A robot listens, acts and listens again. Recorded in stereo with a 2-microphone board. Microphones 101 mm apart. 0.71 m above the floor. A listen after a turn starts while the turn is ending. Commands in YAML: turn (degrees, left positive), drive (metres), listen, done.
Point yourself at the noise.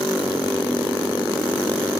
listen: true
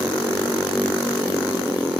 listen: true
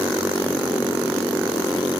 done: "I can't make out anything to turn to."